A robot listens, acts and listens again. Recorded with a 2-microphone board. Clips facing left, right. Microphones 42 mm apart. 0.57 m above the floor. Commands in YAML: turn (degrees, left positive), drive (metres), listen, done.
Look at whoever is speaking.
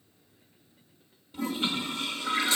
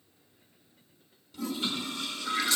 listen: true
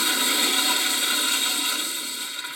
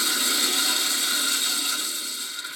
listen: true
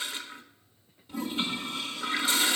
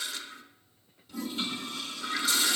done: "I can't make out anyone speaking, only a toilet flushing."